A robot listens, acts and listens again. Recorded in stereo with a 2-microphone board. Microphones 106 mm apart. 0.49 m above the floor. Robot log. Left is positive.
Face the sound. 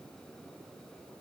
cmd idle
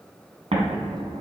cmd yaw -90
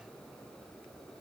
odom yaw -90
end: I heard an explosion from this way, but can't make it out now.